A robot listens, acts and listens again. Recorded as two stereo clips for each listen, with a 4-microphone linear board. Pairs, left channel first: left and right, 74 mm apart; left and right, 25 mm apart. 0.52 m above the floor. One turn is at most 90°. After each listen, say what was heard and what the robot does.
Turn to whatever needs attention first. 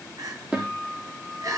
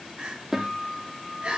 The crying: about 55° right or 125° right. Turn 55° right.
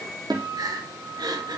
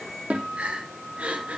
So it is at 70° right. Turn 70° right.
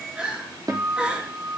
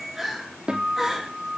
The crying is now 15° right. Turn 15° right.
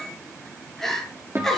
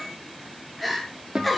Found it: crying, straight ahead.